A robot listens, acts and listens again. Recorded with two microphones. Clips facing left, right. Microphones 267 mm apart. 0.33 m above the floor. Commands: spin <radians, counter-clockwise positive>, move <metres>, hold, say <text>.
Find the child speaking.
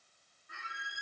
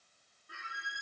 hold
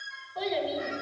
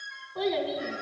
spin -1.05
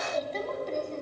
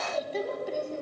spin -0.17
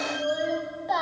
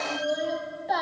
say Facing the child speaking, 1 to 2 m away.